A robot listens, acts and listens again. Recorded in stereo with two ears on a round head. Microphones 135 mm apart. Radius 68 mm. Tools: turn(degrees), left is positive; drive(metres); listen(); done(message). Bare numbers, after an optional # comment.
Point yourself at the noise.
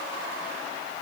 listen()
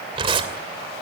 # The tearing paper: about 35° right or 145° right.
turn(-35)
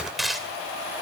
done("Found it: tearing paper, straight ahead.")